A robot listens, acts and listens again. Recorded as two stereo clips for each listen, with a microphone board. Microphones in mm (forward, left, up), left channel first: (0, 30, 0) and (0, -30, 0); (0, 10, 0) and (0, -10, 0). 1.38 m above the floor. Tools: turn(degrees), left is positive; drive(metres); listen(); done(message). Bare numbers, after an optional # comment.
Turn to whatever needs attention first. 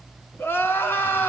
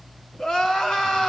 # The crying: about 35° left or 145° left.
turn(35)
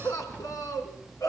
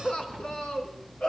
# So it is at 110° left.
turn(110)
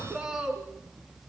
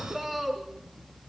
# The crying is now 10° right.
turn(-10)
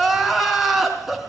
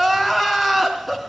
done("Found it: crying, straight ahead, 2 to 4 m away.")